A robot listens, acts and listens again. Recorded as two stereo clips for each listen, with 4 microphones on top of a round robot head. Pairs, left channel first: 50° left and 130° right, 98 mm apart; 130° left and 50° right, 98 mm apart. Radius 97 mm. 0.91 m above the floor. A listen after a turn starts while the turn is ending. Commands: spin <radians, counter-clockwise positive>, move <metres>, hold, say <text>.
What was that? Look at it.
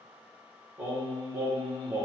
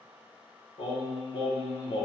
spin 2.79
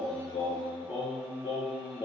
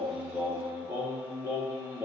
spin 0.26
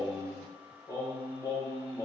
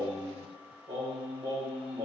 say Facing the singing.